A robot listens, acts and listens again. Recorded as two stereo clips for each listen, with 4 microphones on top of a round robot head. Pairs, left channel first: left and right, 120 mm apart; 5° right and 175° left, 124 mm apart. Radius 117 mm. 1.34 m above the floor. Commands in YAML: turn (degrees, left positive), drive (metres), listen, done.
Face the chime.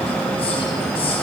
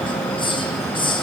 listen: true
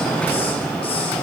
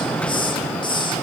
listen: true
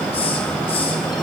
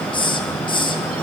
done: "I can't make out a chime, only a hiss."